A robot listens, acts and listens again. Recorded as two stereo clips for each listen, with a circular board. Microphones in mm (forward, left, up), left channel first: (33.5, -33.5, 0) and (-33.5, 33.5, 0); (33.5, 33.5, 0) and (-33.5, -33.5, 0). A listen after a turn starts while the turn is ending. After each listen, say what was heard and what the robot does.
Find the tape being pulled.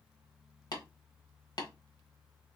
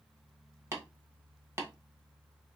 Keep listening.
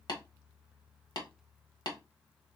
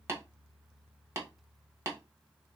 Keep listening.
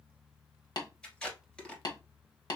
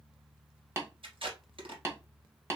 The tape being pulled: 125° right. Turn 125° right.
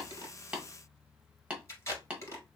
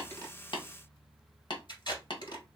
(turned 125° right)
The tape being pulled is now 10° left. Turn 10° left.
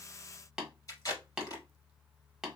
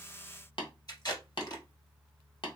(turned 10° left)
Facing the tape being pulled, 1 to 2 m away.